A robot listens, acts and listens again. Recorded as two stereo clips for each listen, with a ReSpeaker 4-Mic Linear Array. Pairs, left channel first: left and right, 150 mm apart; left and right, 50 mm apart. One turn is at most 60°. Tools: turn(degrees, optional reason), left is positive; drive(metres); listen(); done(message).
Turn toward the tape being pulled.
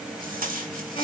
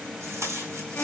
turn(degrees=-60, reason="The tape being pulled: about 70° right or 110° right.")
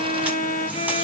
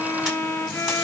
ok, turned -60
listen()
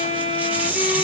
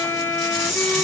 turn(degrees=-10, reason="So it is at 10° right.")
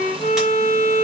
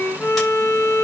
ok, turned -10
listen()
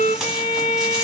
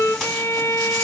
listen()
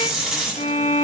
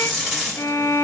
done("Found it: tape being pulled, straight ahead, over 4 m away.")